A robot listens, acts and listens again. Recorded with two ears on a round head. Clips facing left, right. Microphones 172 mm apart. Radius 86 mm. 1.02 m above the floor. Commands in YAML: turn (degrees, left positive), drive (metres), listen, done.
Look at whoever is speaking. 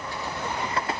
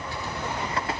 listen: true
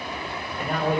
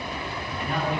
turn: 40
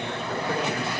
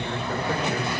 done: "Found it: a man speaking, straight ahead."